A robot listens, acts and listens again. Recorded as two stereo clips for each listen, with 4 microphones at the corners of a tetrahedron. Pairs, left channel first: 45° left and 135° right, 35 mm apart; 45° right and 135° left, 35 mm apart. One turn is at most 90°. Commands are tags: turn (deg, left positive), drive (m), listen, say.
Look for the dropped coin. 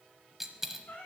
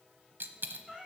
<turn deg="90"/>
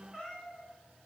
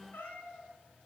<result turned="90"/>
<turn deg="55"/>
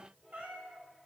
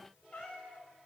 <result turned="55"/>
<say>Facing where the dropped coin came from. I can't hear it now.</say>